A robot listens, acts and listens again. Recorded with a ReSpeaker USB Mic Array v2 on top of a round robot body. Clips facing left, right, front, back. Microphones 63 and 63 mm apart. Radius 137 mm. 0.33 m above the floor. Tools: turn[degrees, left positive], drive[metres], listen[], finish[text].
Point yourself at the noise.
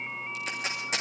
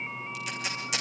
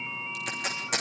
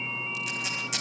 Thought: The tape being pulled: 40° left.
Action: turn[40]
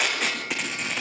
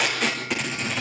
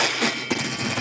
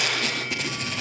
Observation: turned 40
Action: finish[Found it: tape being pulled, straight ahead, over 4 m away.]